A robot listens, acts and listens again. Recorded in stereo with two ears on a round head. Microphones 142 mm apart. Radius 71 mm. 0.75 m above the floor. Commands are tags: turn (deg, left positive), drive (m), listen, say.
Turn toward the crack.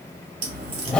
<turn deg="-60"/>
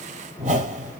<listen/>
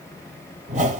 <say>I heard a crack, but can't make it out now. It was about straight ahead or 60° right.</say>